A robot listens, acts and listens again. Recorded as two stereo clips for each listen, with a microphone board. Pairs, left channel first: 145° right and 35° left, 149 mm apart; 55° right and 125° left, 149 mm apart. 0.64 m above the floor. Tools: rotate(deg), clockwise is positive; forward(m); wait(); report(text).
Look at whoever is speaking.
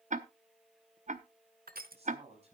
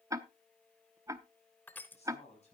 rotate(10)
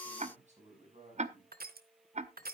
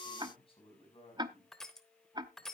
report("Facing the man speaking, over 4 m away.")